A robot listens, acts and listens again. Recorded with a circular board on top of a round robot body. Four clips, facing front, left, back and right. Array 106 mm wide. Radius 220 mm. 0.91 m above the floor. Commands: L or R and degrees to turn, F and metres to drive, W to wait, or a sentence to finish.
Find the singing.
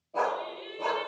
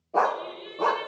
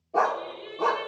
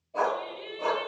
R55
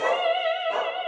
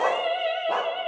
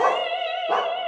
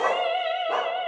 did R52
Found it: singing, straight ahead.